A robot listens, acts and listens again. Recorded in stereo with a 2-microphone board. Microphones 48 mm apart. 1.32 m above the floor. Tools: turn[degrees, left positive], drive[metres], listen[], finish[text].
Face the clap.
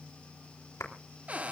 Action: turn[90]
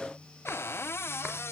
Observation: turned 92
Action: listen[]
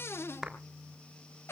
Thought: The clap is now 10° right.
Action: turn[-10]
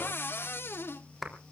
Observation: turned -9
Action: finish[Found it: a clap, straight ahead.]